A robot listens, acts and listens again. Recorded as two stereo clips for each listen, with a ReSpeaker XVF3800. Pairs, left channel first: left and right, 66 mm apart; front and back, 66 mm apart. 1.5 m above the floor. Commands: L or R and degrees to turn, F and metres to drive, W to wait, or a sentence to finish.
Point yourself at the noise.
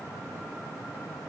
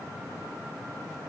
W
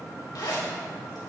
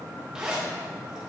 L100
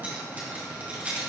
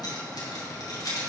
R25
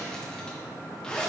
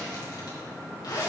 L10
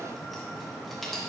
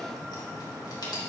Facing the zipper, 2 to 4 m away.